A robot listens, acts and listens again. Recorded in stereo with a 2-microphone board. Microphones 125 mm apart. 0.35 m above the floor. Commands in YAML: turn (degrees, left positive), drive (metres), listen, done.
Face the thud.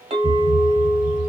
turn: -35
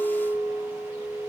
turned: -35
listen: true
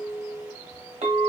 done: "I heard a thud, but can't make it out now. It was about straight ahead or 110° right."